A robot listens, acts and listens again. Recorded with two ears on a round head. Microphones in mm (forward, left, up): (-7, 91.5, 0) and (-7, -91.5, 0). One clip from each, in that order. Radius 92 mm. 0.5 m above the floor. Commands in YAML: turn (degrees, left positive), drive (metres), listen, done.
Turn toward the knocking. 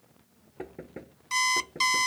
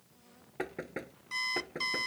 turn: -55
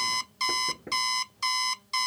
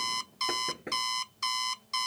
turn: -65
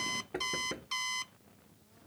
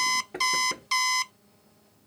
done: "Facing the knocking."